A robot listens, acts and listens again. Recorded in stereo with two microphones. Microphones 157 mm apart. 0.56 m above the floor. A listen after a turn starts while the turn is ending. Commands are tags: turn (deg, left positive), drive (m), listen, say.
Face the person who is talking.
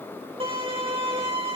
<listen/>
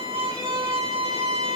<listen/>
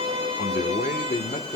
<turn deg="60"/>
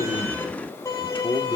<turn deg="35"/>
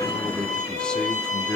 <say>Facing the man speaking, 1 to 2 m away.</say>